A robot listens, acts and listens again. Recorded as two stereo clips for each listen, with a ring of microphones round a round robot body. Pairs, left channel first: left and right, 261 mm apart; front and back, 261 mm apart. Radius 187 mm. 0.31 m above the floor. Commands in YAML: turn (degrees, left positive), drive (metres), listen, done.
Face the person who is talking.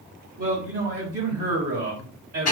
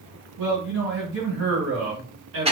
turn: -145
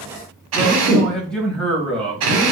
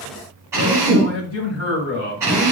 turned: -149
done: "Facing the man speaking, 1 to 2 m away."